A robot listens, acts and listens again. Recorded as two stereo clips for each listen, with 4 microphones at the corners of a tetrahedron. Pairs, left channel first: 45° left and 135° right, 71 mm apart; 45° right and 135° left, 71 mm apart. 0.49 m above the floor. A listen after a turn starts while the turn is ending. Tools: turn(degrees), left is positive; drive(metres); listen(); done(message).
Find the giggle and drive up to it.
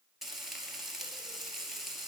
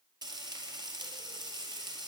listen()
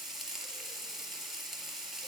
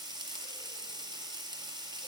listen()
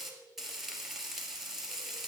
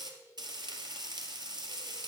done("I can't make out a giggle, only frying.")